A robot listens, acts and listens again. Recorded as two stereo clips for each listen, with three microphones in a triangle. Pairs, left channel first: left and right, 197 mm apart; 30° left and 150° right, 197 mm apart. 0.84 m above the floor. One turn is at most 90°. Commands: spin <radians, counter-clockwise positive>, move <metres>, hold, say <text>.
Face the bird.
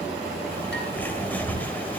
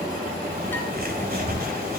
spin 1.57
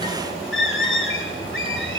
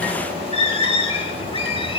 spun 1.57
spin 1.57
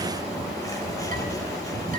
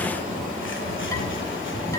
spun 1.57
hold
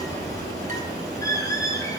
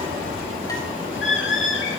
spin 0.35
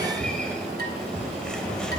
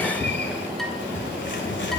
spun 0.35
hold
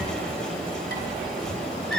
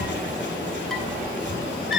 say Found it: a bird, straight ahead.